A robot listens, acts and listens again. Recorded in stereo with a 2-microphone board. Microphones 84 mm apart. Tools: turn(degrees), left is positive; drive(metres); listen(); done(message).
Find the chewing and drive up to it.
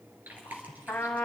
turn(degrees=-20)
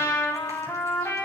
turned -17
listen()
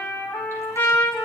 listen()
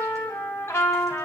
done("I heard chewing, but can't make it out now. It was about 5° right or 140° right. I did not reach it.")